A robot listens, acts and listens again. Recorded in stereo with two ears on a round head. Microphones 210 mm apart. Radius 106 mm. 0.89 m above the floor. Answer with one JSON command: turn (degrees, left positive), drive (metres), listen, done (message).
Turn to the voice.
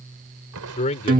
{"turn": 30}
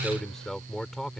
{"done": "Found it: a man speaking, straight ahead."}